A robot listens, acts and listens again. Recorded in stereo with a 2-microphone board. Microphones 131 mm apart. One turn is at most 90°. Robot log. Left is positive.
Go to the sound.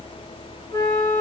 note: The flute: about 20° left or 160° left.
cmd yaw +20
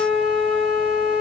cmd fwd 1.0
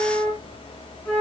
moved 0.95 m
note: The flute is now 10° left.
cmd yaw +10
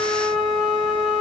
cmd fwd 1.0
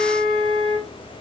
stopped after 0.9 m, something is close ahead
end: I am next to the flute.